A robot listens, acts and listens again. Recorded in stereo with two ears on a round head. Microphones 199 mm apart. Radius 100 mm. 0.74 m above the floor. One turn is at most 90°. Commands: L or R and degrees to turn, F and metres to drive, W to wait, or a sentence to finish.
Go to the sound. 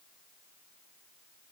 W
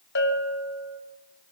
L50
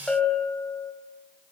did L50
F1.0
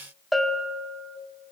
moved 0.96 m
F1.0
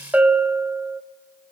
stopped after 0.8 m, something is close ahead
R10
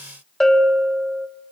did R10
I am next to the bell.